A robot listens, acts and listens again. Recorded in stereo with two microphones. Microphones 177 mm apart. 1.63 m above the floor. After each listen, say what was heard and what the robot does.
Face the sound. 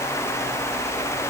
Keep listening.
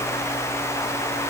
Keep listening.
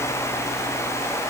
I can't make out anything to turn to.